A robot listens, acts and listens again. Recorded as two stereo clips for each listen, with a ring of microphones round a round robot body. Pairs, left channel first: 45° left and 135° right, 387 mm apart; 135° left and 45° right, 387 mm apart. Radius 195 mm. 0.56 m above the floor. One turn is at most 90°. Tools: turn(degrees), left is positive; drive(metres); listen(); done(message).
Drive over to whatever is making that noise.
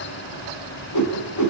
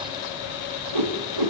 drive(metres=1.0)
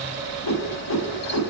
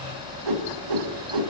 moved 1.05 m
drive(metres=1.0)
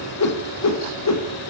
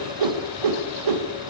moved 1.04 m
drive(metres=1.0)
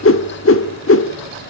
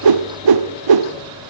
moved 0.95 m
turn(degrees=-15)
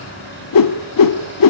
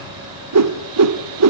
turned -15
drive(metres=1.0)
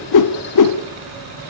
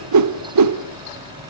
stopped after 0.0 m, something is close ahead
done("Arrived at the whoosh, straight ahead.")